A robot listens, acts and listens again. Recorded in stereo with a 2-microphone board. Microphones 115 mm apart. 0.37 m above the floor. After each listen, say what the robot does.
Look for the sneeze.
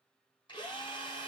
Keep listening.
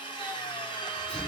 Turn 30° left.
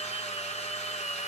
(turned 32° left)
Keep listening.
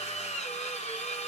I heard a sneeze, but can't make it out now. It was about 25° right or 140° left.